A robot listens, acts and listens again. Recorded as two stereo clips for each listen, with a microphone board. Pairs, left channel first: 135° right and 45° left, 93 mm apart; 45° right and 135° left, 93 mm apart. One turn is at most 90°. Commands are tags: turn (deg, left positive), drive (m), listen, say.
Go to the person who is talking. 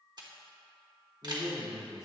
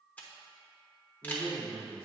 <turn deg="-40"/>
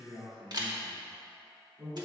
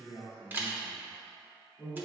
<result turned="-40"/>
<drive m="1.0"/>
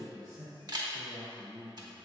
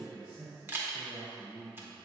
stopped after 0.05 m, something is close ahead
<say>Blocked. The man speaking is further on, straight ahead.</say>